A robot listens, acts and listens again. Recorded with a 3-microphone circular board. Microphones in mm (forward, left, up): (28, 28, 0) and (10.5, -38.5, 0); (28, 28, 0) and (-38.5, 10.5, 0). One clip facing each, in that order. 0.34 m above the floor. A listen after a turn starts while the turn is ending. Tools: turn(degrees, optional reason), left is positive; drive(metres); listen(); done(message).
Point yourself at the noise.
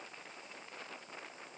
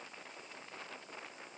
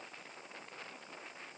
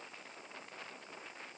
listen()
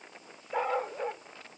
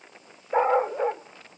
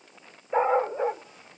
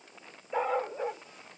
turn(degrees=-50, reason="The dog barking: 50° right.")
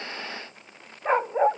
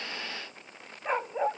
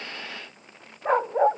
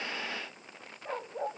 turn(degrees=10, reason="The dog barking is now 10° left.")
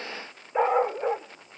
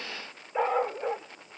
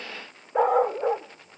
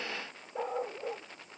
done("Facing the dog barking.")